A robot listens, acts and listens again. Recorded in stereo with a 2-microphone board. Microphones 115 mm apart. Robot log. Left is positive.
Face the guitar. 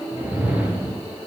cmd idle
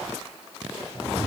cmd idle
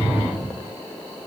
end: I can't make out a guitar, only a whoosh.